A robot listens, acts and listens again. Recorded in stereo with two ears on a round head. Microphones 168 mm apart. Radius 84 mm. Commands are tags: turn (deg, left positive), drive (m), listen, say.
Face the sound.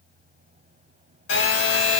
<turn deg="75"/>
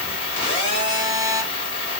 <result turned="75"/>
<turn deg="30"/>
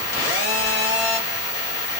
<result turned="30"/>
<turn deg="15"/>
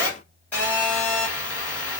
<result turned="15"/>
<turn deg="10"/>
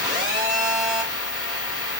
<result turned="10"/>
<say>Found it: a phone buzzing, straight ahead, 1 to 2 m away.</say>